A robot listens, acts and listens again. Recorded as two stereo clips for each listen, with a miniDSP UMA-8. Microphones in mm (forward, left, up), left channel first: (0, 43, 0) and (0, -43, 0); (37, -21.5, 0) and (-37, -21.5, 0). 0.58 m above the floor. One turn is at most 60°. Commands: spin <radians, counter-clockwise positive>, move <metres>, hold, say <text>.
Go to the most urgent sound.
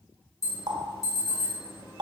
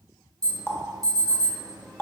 spin 1.05
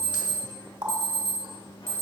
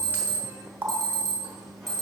spin 1.05
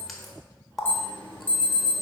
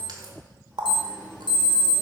spin 0.35
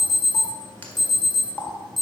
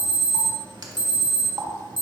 move 1.0
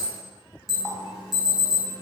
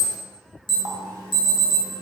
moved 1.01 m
move 1.0
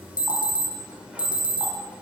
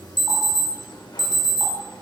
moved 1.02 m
spin -0.17
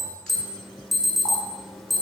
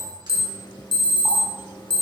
move 1.0
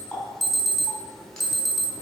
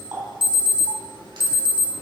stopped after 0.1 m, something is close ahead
say Arrived at the alarm, straight ahead.